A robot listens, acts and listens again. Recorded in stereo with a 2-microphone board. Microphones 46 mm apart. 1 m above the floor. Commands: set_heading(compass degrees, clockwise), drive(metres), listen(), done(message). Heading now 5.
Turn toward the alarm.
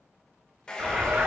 set_heading(40)
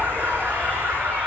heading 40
set_heading(145)
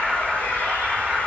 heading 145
set_heading(160)
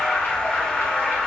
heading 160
done("Facing the alarm, 1 to 2 m away.")